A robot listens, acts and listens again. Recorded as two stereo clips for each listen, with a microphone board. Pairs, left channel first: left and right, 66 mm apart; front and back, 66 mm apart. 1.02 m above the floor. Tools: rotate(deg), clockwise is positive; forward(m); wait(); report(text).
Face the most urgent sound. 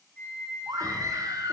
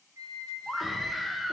rotate(90)
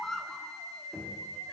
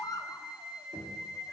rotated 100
rotate(-10)
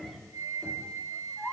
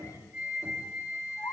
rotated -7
report("Facing the scream, under 1 m away.")